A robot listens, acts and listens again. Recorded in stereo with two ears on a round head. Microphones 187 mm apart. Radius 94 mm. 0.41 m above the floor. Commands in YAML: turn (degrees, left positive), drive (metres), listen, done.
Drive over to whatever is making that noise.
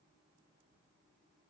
listen: true
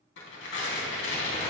turn: 65
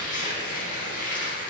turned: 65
turn: 45
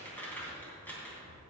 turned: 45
turn: 10
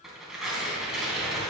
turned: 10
drive: 1.0
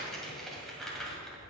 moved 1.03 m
drive: 1.0
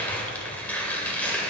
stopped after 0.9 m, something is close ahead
turn: 10
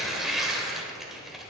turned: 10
done: "I am next to the tearing paper."